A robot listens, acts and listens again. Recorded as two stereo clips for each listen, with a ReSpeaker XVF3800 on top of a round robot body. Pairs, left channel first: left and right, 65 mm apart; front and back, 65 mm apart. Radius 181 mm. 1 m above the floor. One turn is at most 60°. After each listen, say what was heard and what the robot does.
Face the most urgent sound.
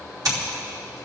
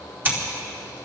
Keep listening.
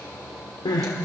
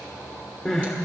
The crying: 75° left. Turn 60° left.
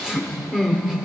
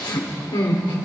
The crying is now 10° right. Turn 10° right.
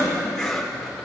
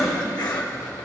Keep listening.
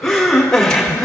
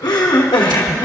Facing the crying.